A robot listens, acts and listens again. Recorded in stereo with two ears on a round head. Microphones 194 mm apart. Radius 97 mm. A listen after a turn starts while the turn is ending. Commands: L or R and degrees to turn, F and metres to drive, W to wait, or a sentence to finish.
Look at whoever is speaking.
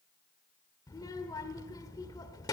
L20
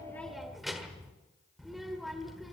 Facing the child speaking, 1 to 2 m away.